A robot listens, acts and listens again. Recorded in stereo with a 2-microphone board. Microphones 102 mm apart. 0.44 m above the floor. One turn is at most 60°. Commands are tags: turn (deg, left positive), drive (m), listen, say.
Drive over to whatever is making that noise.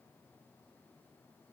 <listen/>
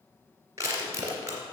<turn deg="-30"/>
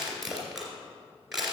<drive m="1.0"/>
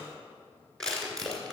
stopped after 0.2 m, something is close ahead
<say>Blocked. The crushing is further on, straight ahead.</say>